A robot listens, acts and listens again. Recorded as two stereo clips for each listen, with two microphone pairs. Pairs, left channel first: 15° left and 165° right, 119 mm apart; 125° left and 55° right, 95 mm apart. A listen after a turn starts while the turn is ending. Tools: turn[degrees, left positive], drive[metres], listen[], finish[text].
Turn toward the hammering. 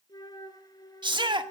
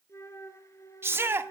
Action: listen[]
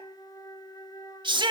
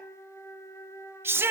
Action: listen[]
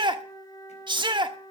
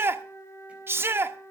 Action: finish[I can't make out hammering, only a flute and a shout.]